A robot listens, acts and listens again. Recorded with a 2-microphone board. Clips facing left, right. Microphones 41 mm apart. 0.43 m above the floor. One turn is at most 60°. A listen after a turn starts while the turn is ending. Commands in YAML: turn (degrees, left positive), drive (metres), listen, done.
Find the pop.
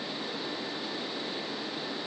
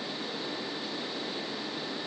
listen: true
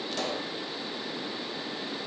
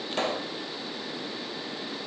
turn: -35
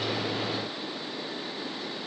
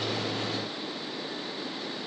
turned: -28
listen: true
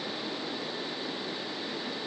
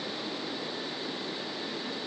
done: "I heard a pop, but can't make it out now. It was about 10° right or 115° right."